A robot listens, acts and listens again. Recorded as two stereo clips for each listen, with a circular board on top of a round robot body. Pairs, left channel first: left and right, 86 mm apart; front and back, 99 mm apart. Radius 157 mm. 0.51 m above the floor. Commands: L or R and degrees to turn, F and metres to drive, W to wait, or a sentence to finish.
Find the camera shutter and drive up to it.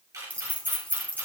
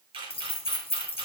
R145
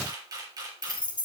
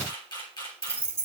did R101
R45
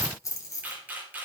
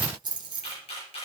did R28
R20
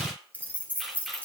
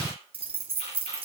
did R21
F1.0
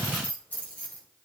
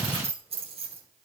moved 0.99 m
W
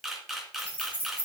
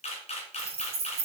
F1.0
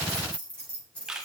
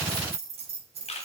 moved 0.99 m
R10
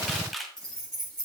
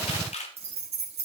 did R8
F1.0
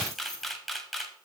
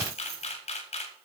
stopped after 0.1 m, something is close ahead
I am next to the camera shutter.